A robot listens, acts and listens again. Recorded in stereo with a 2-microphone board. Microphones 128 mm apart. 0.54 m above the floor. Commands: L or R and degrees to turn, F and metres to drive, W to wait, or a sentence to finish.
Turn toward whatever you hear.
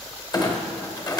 L30
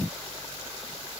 W
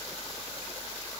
I heard a clunk, but can't make it out now. It was about straight ahead or 120° left.